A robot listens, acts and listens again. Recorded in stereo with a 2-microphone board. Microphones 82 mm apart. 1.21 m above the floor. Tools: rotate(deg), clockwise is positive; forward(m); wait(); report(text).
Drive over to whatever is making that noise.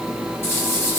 rotate(-30)
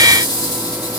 rotate(-120)
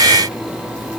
wait()
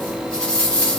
rotate(-10)
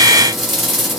forward(1.0)
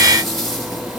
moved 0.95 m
forward(1.0)
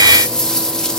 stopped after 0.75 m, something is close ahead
rotate(-10)
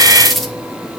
report("I am next to the rattle.")